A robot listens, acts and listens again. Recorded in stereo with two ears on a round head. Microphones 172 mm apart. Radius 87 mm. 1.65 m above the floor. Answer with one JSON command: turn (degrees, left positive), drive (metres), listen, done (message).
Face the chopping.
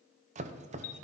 {"turn": -35}
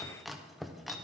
{"done": "Found it: chopping, straight ahead."}